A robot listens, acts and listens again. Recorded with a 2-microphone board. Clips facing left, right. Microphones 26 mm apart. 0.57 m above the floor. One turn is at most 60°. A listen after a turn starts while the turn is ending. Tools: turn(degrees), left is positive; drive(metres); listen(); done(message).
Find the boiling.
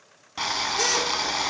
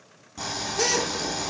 turn(degrees=55)
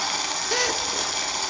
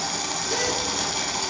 done("Facing the boiling, 1 to 2 m away.")